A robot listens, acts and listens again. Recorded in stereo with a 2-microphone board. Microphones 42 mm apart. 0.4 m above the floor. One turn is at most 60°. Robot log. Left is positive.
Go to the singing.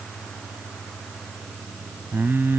note: The singing: about 60° right or 120° right.
cmd yaw -60
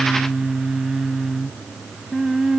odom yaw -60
note: So it is at 10° right.
cmd yaw -10
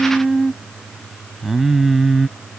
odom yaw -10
cmd fwd 1.0
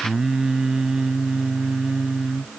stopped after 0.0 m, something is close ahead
note: The singing is now 10° right.
cmd yaw -10
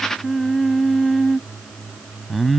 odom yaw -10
end: Blocked. The singing is further on, straight ahead.